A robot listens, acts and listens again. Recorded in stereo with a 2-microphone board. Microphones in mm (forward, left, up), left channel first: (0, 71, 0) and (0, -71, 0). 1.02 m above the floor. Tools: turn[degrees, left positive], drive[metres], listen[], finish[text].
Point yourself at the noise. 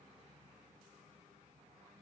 Action: listen[]
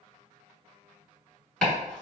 Action: turn[30]
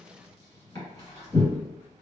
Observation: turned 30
Thought: So it is at 140° left.
Action: turn[140]
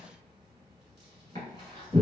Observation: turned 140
Thought: The chopping is now 35° left.
Action: turn[35]
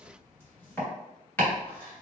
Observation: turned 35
Thought: The chopping is now 15° left.
Action: turn[15]
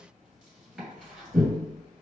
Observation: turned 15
Action: finish[Facing the chopping, 1 to 2 m away.]